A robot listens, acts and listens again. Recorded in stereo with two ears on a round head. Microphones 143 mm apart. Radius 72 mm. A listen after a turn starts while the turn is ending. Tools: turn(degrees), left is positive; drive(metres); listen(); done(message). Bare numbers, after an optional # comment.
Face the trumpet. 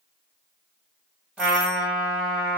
turn(-30)
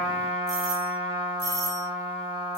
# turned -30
# So it is at 150° right.
turn(-150)
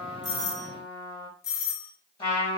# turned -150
# The trumpet is now 30° left.
turn(30)
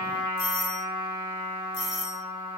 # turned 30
# The trumpet is now 10° right.
turn(-10)
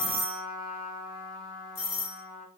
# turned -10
done("Found it: a trumpet, straight ahead.")